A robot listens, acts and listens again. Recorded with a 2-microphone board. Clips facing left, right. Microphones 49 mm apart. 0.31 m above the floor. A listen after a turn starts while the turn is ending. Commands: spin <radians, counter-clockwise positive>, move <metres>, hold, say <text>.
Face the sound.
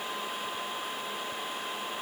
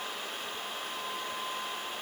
hold
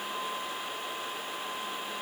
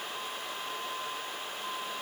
hold
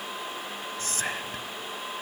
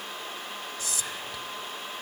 spin 0.79
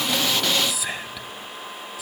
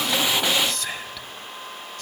spin 0.17
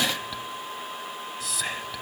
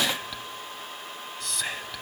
say Found it: whispering, straight ahead.